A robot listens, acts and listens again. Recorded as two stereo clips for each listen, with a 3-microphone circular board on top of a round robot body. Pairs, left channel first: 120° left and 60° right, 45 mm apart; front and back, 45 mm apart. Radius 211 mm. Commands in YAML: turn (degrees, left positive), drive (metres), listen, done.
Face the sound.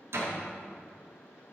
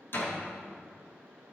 turn: -40
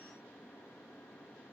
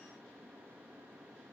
done: "I heard a door slam from this way, but can't make it out now."